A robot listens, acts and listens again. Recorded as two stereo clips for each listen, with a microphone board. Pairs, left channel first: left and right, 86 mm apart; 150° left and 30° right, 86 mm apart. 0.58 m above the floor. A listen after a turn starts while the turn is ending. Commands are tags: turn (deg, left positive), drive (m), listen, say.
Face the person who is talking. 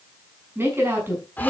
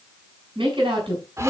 <turn deg="-30"/>
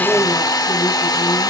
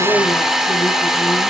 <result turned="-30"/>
<listen/>
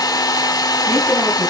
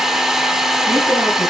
<listen/>
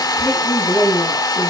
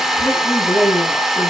<say>Facing the woman speaking, over 4 m away.</say>